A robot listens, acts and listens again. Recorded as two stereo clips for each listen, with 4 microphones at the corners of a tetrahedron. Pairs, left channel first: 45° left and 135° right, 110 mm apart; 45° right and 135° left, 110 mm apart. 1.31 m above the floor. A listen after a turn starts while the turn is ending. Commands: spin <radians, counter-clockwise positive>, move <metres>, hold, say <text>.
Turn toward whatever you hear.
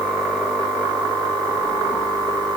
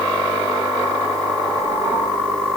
hold
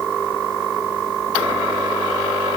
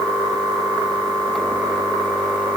hold
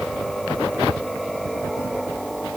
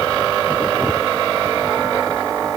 say I can't make out anything to turn to.